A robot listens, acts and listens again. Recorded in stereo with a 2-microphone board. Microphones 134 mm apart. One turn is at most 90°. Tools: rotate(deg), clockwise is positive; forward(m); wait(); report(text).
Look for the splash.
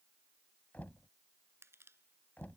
wait()
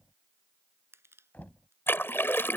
rotate(-15)
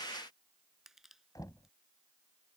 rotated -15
wait()
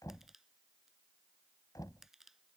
report("I heard a splash, but can't make it out now. It was about straight ahead or 150° left.")